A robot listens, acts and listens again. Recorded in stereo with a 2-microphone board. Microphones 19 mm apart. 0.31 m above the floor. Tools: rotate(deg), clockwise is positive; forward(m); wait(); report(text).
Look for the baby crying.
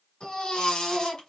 rotate(-45)
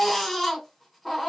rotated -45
report("Facing the baby crying, 1 to 2 m away.")